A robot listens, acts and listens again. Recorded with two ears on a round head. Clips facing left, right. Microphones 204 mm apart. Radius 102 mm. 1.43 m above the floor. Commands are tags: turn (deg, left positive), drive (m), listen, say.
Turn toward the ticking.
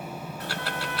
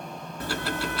<turn deg="-90"/>
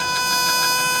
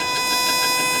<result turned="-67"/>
<turn deg="-25"/>
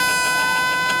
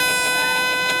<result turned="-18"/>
<listen/>
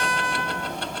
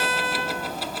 <say>Found it: ticking, straight ahead.</say>